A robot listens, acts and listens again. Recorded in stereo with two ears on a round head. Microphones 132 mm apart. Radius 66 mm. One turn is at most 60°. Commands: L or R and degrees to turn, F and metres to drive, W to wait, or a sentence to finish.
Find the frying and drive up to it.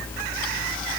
W
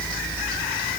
W
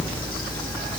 I can't make out frying.